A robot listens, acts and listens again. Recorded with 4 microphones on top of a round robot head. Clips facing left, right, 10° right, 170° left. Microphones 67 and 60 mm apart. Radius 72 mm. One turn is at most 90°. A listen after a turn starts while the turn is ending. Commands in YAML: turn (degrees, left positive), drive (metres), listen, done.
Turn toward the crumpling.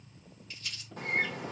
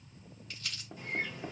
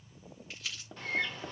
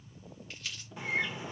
turn: -90
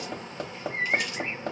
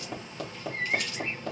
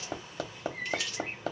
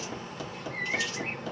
listen: true
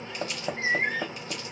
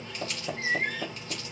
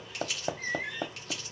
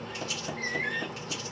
turn: -35
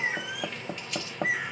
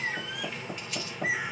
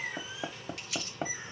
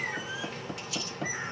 done: "Found it: crumpling, straight ahead."